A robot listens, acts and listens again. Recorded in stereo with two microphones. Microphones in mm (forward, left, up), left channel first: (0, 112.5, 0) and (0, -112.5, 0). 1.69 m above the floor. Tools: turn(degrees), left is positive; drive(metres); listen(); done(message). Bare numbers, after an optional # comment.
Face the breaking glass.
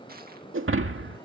# The breaking glass: about 60° right or 120° right.
turn(-60)
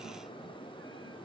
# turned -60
listen()
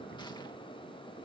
done("I heard breaking glass, but can't make it out now. It was about straight ahead or 60° right.")